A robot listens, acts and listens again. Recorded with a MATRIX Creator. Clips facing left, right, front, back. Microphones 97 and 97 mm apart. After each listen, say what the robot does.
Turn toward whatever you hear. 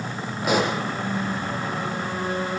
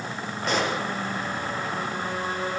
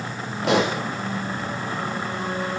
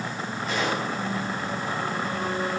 Turn 10° left.
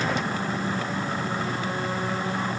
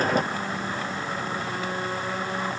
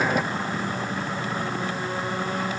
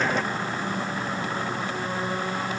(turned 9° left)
I heard a pop from this way, but can't make it out now.